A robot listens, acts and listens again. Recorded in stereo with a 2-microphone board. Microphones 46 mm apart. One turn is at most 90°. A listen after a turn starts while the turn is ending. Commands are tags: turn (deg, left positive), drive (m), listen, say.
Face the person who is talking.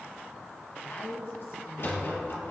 <turn deg="55"/>
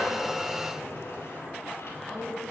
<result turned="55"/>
<say>Facing the woman speaking.</say>